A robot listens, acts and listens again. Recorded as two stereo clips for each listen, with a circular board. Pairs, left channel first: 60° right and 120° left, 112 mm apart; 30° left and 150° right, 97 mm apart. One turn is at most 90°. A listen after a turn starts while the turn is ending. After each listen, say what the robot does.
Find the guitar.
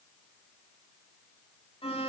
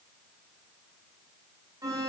Keep listening.
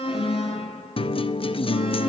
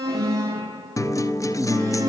Turn 25° right.
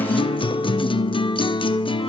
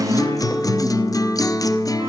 Turn 20° right.
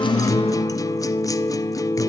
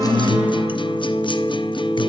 Found it: a guitar, straight ahead.